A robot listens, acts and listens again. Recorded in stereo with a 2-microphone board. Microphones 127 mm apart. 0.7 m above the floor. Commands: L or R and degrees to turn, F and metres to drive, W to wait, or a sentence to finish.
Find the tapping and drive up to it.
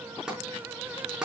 R30
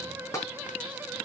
L25
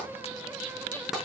F1.0
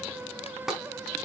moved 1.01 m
F1.0
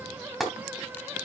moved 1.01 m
F1.0
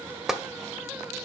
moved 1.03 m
F1.0
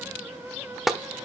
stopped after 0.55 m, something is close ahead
Arrived at the tapping, straight ahead.